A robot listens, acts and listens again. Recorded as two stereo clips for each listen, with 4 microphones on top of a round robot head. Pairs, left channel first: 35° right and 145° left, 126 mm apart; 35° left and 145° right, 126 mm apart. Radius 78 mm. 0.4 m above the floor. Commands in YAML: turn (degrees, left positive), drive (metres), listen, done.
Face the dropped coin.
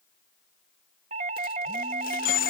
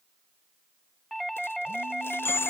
turn: -40
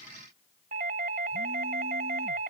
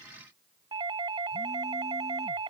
done: "I heard a dropped coin from this way, but can't make it out now."